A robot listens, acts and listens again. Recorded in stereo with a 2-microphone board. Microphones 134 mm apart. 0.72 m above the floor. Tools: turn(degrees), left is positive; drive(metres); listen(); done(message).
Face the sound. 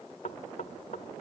turn(degrees=65)
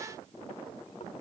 listen()
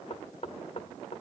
turn(degrees=50)
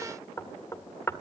turn(degrees=20)
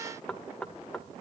done("Facing the knocking.")